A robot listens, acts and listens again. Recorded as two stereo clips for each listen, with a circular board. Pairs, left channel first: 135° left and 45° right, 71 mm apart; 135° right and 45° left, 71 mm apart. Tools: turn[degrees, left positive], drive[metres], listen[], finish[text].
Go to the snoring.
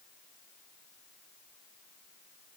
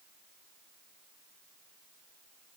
Action: listen[]
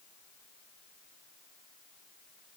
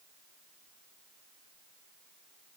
Action: listen[]
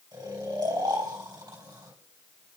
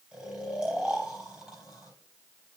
Thought: The snoring: 35° right.
Action: turn[-35]
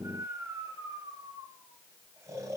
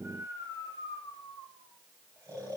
Action: drive[1.0]
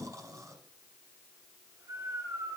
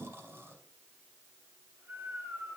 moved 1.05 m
Thought: The snoring is now 10° right.
Action: turn[-10]
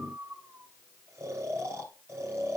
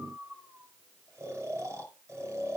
Action: drive[1.0]
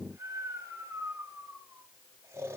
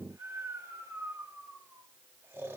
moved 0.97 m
Action: drive[1.0]
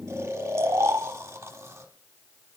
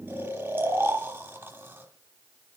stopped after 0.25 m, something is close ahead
Action: finish[I am next to the snoring.]